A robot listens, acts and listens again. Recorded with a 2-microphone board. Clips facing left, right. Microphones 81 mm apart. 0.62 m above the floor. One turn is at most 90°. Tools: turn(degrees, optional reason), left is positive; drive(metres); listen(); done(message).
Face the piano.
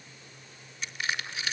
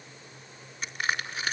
listen()
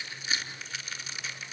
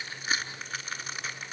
listen()
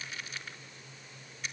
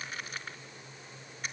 done("I can't make out a piano, only crushing.")